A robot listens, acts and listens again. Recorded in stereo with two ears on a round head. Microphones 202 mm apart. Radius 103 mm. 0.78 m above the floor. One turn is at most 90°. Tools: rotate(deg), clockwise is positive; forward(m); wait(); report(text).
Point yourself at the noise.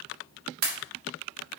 rotate(70)
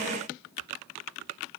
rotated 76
wait()
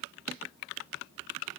report("I heard a pop, but can't make it out now. It was about 5° left or 30° right.")